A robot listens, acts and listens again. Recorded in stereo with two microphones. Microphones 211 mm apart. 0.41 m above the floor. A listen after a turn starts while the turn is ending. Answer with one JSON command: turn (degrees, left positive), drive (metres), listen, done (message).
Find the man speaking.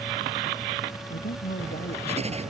{"turn": 45}
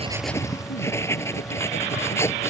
{"listen": true}
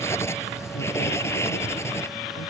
{"listen": true}
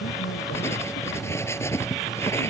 {"done": "I heard a man speaking, but can't make it out now. It was about straight ahead or 90° left."}